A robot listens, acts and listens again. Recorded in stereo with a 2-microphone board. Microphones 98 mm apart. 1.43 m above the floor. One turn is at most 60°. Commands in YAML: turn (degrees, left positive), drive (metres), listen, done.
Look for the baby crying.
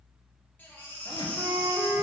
turn: 20
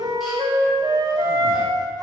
listen: true
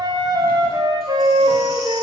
listen: true
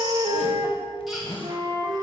done: "I heard a baby crying, but can't make it out now. It was about straight ahead or 140° left."